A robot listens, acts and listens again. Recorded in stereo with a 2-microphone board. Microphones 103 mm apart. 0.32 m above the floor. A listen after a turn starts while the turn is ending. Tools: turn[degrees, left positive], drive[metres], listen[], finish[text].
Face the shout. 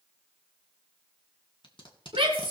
Thought: The shout: about 60° right or 120° right.
Action: turn[-60]
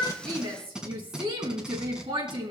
Thought: So it is at 55° right.
Action: turn[-55]
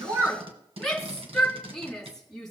Action: finish[Found it: a shout, straight ahead, 2 to 4 m away.]